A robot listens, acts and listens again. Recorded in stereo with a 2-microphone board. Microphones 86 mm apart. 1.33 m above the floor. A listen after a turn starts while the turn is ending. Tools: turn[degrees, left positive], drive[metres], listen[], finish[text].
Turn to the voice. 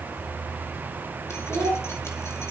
Thought: The child speaking: about 25° right or 155° right.
Action: turn[-25]
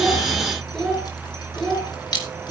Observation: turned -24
Action: finish[Facing the child speaking, 2 to 4 m away.]